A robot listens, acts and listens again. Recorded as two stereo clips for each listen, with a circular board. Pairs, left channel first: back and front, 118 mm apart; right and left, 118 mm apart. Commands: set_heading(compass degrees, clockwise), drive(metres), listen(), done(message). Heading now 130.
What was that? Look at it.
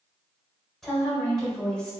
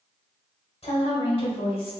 set_heading(230)
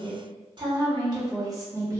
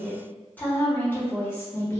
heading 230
set_heading(270)
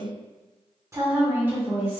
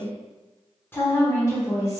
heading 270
set_heading(335)
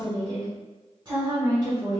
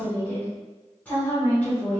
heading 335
set_heading(355)
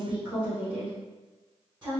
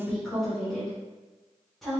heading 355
done("Found it: a woman speaking, straight ahead, 1 to 2 m away.")